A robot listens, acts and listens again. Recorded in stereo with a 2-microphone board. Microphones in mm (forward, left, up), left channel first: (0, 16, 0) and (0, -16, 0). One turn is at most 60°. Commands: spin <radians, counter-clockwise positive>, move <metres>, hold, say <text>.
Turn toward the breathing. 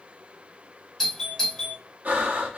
spin -1.05
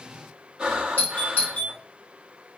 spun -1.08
spin -0.52
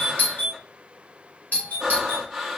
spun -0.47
say Facing the breathing.